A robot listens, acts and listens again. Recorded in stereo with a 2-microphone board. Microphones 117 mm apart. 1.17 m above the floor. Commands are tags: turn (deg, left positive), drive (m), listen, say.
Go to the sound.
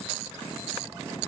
<listen/>
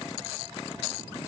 <listen/>
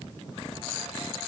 <say>I can't make out anything to turn to.</say>